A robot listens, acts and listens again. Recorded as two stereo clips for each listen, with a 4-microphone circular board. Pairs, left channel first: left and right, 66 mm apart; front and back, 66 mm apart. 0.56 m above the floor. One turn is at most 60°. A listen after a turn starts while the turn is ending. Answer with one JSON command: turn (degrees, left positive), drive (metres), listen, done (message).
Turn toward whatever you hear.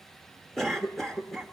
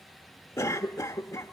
{"done": "Facing the cough."}